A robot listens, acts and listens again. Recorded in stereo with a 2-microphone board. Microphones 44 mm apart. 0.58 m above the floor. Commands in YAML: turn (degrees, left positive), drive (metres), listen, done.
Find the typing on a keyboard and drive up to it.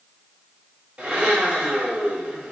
listen: true
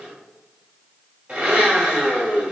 listen: true
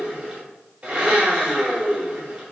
done: "I can't make out typing on a keyboard to turn to."